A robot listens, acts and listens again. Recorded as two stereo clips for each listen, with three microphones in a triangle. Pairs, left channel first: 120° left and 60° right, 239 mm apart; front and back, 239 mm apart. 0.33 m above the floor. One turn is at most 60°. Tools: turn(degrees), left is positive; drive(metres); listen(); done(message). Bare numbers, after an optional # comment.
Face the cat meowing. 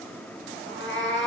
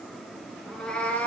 # The cat meowing: 85° left.
turn(60)
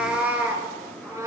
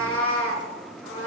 # The cat meowing is now 15° left.
turn(15)
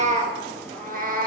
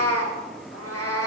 # The cat meowing is now 10° right.
turn(-10)
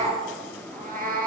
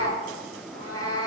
# The cat meowing is now 10° right.
turn(-10)
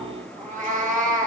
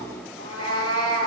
done("Facing the cat meowing.")